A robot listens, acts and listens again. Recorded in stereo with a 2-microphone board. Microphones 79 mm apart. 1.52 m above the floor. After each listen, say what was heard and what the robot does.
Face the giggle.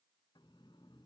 Keep listening.
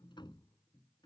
Keep listening.
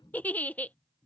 The giggle: about 20° left or 160° left. Turn 20° left.
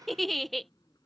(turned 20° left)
Facing the giggle.